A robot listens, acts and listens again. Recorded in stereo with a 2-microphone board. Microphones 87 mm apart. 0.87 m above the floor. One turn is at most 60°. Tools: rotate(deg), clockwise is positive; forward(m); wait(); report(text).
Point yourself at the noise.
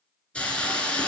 rotate(-30)
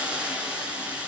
rotate(15)
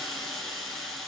report("Found it: a hiss, straight ahead.")